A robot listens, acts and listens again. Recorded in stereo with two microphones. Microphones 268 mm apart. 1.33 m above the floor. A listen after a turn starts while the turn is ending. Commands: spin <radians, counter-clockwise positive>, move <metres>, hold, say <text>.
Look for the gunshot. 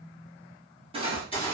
spin 0.35
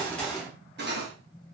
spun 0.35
say Facing the gunshot.